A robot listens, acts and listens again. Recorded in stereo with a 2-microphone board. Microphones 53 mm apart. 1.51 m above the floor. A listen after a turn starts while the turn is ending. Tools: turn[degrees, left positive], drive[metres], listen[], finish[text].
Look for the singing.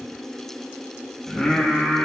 Thought: The singing: about 15° left or 165° left.
Action: turn[15]
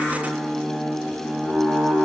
Action: finish[Facing the singing.]